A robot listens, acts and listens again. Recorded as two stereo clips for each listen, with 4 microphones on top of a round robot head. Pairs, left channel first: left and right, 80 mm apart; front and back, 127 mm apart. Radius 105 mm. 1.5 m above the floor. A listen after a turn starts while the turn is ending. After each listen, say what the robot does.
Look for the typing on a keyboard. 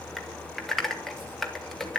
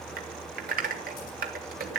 Turn 175° left.
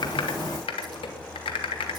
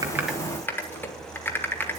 Turn 75° left.
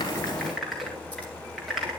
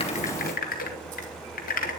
Facing the typing on a keyboard, 2 to 4 m away.